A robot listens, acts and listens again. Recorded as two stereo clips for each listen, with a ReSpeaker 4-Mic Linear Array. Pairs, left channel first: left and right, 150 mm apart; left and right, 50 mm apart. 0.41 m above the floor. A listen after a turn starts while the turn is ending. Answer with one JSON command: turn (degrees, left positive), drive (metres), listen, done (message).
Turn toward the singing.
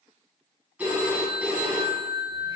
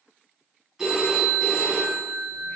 {"listen": true}
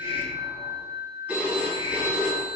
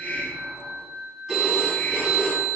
{"listen": true}
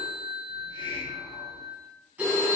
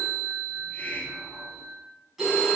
{"done": "I can't make out singing to turn to."}